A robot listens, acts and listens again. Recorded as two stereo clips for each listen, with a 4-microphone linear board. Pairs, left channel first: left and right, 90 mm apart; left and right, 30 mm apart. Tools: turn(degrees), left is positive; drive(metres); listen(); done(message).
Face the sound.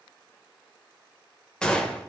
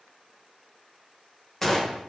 turn(degrees=30)
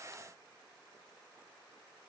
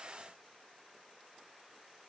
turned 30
listen()
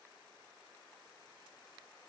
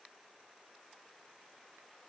done("I heard a gunshot, but can't make it out now. It was about 20° right or 140° left.")